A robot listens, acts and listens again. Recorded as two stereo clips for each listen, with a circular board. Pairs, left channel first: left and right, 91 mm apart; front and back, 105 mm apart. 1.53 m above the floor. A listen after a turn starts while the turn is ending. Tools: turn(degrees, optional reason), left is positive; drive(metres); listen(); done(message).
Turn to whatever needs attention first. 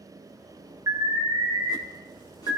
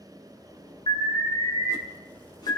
turn(degrees=-40, reason="The alarm: 40° right.")
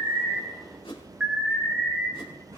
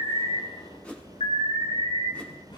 turn(degrees=-10, reason="The alarm is now 10° right.")
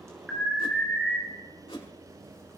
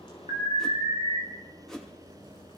done("Facing the alarm, 2 to 4 m away.")